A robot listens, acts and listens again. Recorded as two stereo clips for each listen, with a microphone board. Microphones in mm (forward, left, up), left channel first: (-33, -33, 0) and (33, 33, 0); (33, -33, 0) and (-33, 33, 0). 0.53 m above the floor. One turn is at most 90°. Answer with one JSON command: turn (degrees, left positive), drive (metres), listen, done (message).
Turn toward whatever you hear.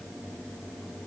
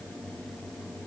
{"listen": true}
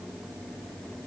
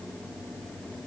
{"listen": true}
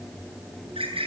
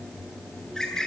{"turn": 40}
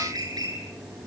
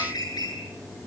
{"done": "Facing the bird."}